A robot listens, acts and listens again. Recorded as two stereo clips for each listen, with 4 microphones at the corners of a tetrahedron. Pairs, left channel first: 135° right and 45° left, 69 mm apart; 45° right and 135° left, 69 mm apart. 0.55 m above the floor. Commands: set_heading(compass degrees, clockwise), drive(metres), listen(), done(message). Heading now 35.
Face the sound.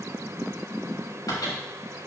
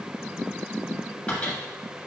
set_heading(155)
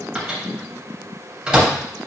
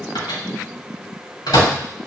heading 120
set_heading(155)
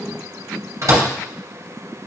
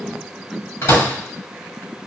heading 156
done("Facing the microwave.")